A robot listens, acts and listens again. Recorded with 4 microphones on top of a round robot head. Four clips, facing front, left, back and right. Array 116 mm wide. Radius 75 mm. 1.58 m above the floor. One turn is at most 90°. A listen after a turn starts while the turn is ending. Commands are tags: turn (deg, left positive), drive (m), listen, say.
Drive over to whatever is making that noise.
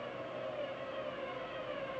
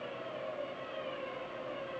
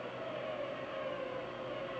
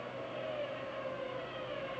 <listen/>
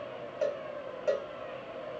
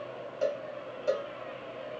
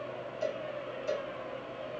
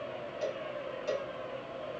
<turn deg="25"/>
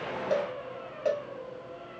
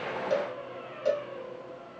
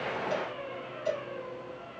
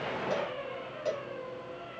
<turn deg="15"/>
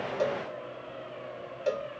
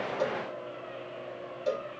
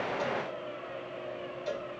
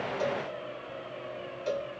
<drive m="1.0"/>
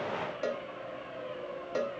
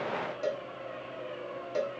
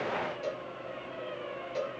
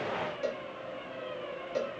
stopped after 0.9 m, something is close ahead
<turn deg="10"/>
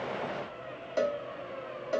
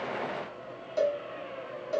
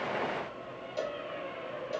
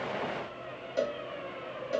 <say>Arrived at the cowbell, straight ahead.</say>